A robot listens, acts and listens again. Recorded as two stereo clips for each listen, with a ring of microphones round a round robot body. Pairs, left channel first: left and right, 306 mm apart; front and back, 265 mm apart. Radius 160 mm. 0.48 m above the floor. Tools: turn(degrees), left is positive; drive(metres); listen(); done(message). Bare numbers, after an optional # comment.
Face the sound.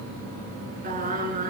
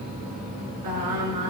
# The singing: 155° right.
turn(-155)
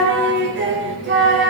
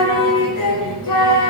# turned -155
# The singing is now 35° right.
turn(-35)
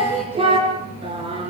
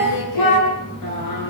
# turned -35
# The singing is now 15° right.
turn(-15)
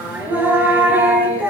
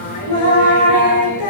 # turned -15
done("Facing the singing, over 4 m away.")